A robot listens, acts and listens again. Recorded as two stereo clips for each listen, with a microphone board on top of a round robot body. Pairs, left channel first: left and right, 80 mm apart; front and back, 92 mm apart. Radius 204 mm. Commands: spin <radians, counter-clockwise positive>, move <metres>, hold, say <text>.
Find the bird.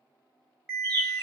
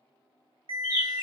spin -2.09
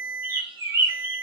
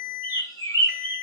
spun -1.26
spin -0.87
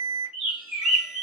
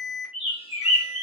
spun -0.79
say Found it: a bird, straight ahead, 1 to 2 m away.